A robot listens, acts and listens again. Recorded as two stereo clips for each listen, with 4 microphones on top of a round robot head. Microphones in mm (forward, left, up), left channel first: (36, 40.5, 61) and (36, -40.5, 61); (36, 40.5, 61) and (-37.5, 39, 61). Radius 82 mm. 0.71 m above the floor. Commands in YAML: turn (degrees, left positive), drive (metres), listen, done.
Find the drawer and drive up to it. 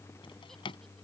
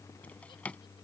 turn: 75
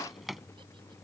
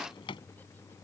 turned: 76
drive: 1.0
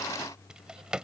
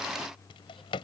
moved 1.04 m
turn: -10
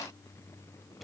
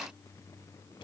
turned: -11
listen: true
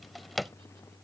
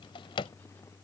drive: 1.0
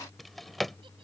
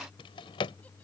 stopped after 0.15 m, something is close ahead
done: "Arrived at the drawer, straight ahead."